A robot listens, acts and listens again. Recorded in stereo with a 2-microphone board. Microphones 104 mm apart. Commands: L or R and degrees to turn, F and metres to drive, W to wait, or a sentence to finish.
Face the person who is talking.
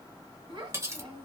R50
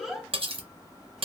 Found it: a child speaking, straight ahead.